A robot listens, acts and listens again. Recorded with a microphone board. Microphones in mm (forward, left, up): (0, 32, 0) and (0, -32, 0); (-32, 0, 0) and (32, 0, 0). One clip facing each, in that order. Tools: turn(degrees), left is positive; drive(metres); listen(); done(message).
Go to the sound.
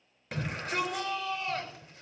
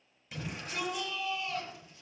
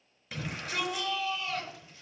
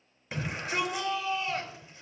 turn(degrees=65)
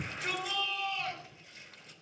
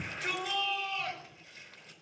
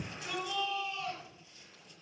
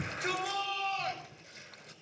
drive(metres=1.0)
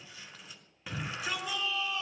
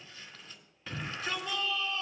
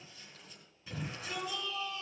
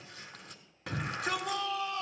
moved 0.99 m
turn(degrees=10)
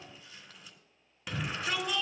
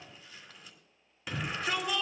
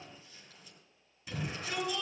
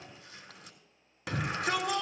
drive(metres=1.0)
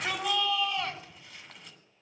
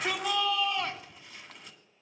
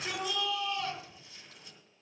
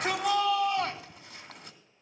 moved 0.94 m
drive(metres=1.0)
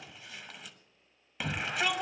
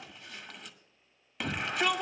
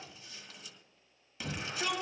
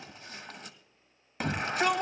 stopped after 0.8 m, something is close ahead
done("Arrived at the shout, straight ahead.")